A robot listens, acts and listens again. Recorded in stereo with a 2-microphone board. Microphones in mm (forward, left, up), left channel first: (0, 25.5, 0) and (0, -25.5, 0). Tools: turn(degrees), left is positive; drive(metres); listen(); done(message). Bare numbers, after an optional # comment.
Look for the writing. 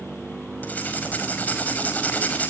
# The writing: about 35° left or 145° left.
turn(35)
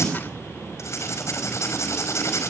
# So it is at 110° left.
turn(110)
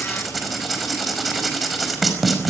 done("Facing the writing, over 4 m away.")